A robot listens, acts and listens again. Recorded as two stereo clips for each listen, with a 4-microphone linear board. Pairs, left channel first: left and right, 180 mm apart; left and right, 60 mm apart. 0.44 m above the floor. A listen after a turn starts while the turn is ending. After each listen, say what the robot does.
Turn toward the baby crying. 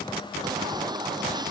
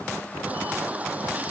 Turn 25° right.
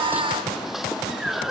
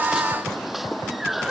Facing the baby crying.